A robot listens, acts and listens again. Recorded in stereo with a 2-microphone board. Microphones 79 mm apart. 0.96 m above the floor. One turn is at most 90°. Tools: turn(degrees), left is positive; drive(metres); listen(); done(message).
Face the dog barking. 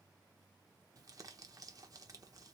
listen()
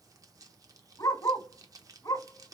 turn(degrees=55)
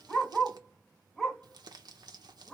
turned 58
done("Facing the dog barking.")